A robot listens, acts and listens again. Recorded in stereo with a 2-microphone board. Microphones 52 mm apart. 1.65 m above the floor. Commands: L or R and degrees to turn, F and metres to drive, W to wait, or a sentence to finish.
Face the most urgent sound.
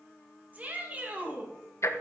R30
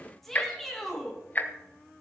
Facing the shout, 2 to 4 m away.